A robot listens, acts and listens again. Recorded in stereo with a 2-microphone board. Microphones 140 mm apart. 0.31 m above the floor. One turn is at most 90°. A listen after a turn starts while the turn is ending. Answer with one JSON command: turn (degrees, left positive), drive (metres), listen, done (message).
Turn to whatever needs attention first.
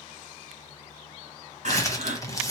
{"turn": -60}
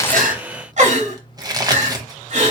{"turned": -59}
{"turn": -60}
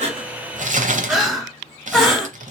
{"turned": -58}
{"done": "Facing the crying."}